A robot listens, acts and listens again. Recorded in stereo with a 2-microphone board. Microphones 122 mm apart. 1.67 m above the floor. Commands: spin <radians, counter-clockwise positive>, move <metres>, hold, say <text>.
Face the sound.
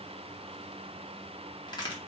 spin 0.61
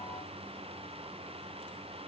hold
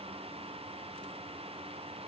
say I heard a crack, but can't make it out now. It was about straight ahead or 110° left.